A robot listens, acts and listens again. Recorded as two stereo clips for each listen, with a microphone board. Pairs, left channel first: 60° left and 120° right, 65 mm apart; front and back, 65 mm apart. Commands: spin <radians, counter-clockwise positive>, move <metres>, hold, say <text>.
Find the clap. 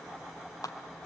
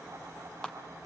spin 1.31
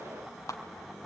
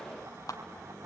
spin 0.35
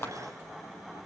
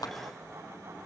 say Facing the clap.